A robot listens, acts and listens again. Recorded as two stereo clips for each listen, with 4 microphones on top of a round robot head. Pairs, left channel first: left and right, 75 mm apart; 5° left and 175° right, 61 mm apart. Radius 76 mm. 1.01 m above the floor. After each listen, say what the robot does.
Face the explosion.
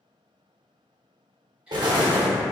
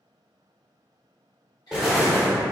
Turn 90° right.
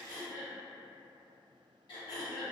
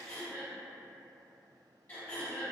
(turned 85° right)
Facing where the explosion came from. I can't hear it now.